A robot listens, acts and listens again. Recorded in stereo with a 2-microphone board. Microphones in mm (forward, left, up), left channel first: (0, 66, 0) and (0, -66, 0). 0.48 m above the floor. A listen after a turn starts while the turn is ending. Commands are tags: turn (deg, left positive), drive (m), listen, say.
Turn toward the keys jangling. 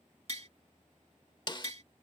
<listen/>
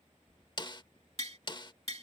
<turn deg="35"/>
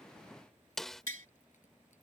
<listen/>
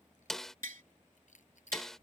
<turn deg="110"/>
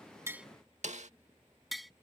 <turn deg="25"/>
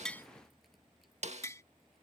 <listen/>
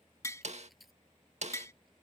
<say>Facing the keys jangling.</say>